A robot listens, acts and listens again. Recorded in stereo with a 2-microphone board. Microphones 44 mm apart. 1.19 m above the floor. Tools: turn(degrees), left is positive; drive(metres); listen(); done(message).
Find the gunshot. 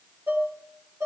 listen()
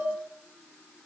listen()
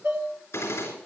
turn(degrees=90)
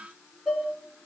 done("I heard a gunshot from this way, but can't make it out now.")